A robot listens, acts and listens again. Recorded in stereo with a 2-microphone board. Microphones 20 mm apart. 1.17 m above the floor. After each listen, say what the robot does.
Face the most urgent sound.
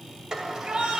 Turn 50° right.
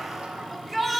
Found it: a shout, straight ahead, 2 to 4 m away.